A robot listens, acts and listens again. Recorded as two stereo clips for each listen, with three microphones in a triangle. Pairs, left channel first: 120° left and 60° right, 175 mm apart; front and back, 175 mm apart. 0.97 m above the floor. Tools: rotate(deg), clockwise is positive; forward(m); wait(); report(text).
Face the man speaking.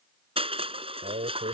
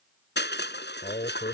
rotate(25)
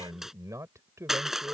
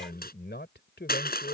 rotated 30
rotate(-15)
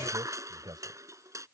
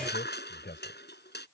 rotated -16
report("Found it: a man speaking, straight ahead.")